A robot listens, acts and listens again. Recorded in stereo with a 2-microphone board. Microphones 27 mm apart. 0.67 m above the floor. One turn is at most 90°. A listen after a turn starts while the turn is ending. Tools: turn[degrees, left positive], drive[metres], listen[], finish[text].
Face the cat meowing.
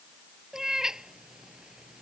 Thought: The cat meowing: about 20° right or 160° right.
Action: turn[-20]
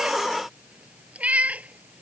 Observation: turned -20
Thought: So it is at 115° right.
Action: turn[-90]
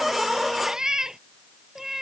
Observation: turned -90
Thought: The cat meowing is now 15° right.
Action: turn[-15]
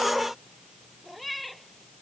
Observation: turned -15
Action: finish[Facing the cat meowing.]